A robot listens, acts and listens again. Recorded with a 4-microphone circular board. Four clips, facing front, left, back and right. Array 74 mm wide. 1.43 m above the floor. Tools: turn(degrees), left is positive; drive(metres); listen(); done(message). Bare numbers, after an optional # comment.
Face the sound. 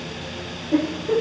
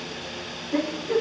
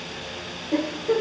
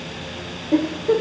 # The giggle: 95° right.
turn(-95)
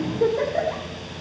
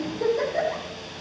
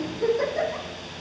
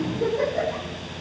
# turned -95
# The giggle is now 15° left.
turn(15)
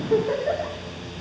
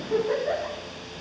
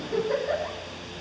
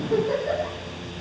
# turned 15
done("Found it: a giggle, straight ahead, over 4 m away.")